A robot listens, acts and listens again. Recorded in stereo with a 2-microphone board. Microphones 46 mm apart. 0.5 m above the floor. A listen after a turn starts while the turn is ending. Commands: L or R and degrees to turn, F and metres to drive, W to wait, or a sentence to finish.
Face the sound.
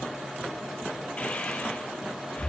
L30
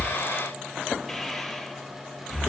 Found it: breathing, straight ahead, 2 to 4 m away.